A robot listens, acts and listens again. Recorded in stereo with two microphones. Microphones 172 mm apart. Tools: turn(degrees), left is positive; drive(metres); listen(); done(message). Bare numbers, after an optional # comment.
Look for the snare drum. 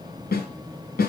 # The snare drum: about 60° left or 120° left.
turn(60)
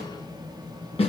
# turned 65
# So it is at 40° left.
turn(40)
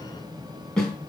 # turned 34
done("Found it: a snare drum, straight ahead.")